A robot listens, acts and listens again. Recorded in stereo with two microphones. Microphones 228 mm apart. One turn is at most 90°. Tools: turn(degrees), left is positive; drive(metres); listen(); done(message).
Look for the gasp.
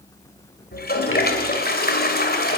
listen()
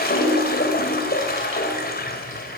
listen()
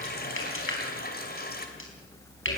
done("I can't make out a gasp to turn to.")